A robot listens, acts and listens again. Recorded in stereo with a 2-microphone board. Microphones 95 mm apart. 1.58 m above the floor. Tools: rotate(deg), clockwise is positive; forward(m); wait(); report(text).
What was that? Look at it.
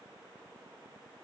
wait()
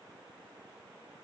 wait()
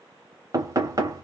rotate(40)
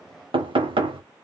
rotate(100)
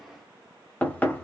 rotate(-20)
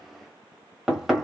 report("Facing the knocking, under 1 m away.")